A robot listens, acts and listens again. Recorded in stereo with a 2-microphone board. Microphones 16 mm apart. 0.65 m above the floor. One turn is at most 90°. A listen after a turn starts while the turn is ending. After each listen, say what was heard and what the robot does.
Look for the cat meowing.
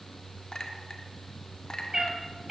The cat meowing: about 25° right or 155° right. Turn 25° right.
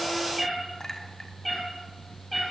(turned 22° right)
So it is at 10° left. Turn 10° left.
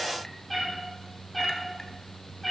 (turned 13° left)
Found it: a cat meowing, straight ahead, over 4 m away.